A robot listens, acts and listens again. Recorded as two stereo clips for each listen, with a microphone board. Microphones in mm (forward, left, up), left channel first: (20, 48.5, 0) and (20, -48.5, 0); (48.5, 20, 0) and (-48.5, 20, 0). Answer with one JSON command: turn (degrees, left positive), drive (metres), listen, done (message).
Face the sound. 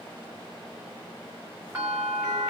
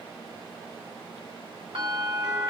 {"turn": -165}
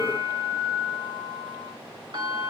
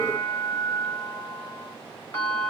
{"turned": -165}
{"turn": -65}
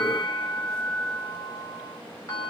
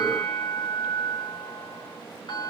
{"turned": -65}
{"turn": 30}
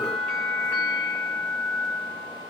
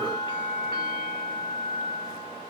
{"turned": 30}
{"turn": 10}
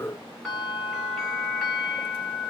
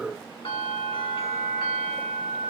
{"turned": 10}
{"done": "Found it: a bell, straight ahead, 2 to 4 m away."}